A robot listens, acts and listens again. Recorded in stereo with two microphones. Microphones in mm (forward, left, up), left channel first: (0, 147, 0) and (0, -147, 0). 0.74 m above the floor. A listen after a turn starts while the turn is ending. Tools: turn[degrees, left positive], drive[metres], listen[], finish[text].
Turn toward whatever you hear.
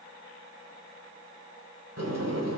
Thought: The sliding door: about 65° right or 115° right.
Action: turn[-65]
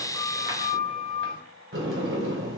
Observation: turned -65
Thought: So it is at 50° right.
Action: turn[-50]
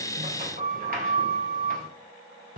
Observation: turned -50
Thought: The sliding door is now 30° right.
Action: turn[-30]
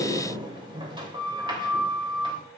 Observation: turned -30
Thought: The sliding door is now 20° right.
Action: turn[-20]
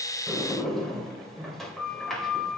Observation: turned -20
Action: finish[Facing the sliding door, 2 to 4 m away.]